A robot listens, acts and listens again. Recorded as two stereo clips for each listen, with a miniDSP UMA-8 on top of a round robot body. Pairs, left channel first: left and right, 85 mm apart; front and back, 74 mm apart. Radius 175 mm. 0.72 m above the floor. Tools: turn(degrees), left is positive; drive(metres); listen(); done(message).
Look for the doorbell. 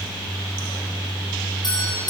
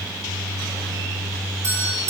turn(degrees=125)
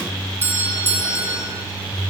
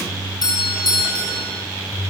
turn(degrees=-25)
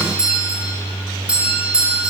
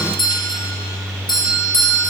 turn(degrees=-10)
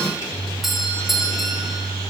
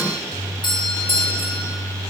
done("Facing the doorbell.")